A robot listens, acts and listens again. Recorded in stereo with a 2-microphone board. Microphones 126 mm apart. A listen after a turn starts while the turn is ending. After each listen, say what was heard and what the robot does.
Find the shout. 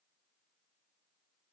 Keep listening.
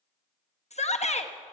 The shout: about 60° left or 120° left. Turn 60° left.
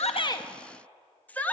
So it is at 15° left. Turn 15° left.
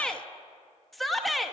Facing the shout, under 1 m away.